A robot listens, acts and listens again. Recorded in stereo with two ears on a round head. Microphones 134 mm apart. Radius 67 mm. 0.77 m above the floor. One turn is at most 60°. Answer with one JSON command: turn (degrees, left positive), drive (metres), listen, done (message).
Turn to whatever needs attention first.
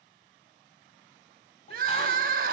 {"turn": -60}
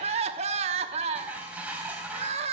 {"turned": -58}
{"turn": -45}
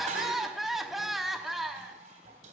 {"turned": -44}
{"done": "Found it: crying, straight ahead, under 1 m away."}